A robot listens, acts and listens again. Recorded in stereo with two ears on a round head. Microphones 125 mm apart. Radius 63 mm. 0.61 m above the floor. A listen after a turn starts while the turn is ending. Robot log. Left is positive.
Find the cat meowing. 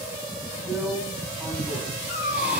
note: The cat meowing: about 60° left or 120° left.
cmd yaw +60
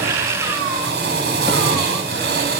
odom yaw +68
cmd idle
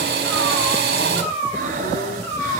note: So it is at 10° left.
cmd yaw +10
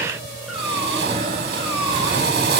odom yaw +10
cmd idle
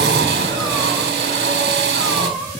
end: Found it: a cat meowing, straight ahead, over 4 m away.